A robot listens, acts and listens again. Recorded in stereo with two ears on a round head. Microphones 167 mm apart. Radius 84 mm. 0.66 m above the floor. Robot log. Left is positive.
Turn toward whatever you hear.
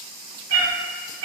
cmd yaw -90
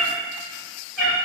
end: Found it: a cat meowing, straight ahead, 1 to 2 m away.